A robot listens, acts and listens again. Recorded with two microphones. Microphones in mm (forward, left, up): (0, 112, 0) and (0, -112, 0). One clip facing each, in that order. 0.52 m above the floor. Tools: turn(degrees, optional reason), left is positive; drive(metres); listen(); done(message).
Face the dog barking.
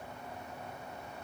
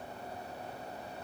listen()
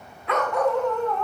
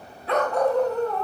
turn(degrees=-40, reason="The dog barking: about 40° right or 140° right.")
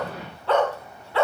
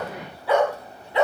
turn(degrees=-20, reason="So it is at 20° right.")
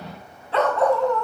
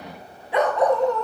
turn(degrees=-20, reason="The dog barking is now 20° right.")
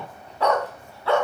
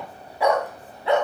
turn(degrees=-20, reason="The dog barking is now 20° right.")
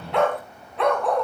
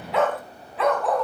done("Facing the dog barking.")